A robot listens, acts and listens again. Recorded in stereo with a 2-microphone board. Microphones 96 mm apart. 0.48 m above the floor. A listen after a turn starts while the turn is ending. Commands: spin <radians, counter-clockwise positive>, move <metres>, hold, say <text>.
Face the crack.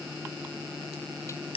spin 1.22
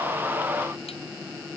hold
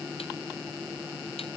say I heard a crack, but can't make it out now. It was about straight ahead or 40° left.